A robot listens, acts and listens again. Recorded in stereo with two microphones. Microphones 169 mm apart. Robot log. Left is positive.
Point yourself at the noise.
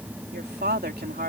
note: The woman speaking: about 70° right or 110° right.
cmd yaw -70
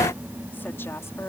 cmd idle
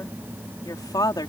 note: So it is at 25° left.
cmd yaw +25
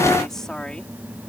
end: Found it: a woman speaking, straight ahead.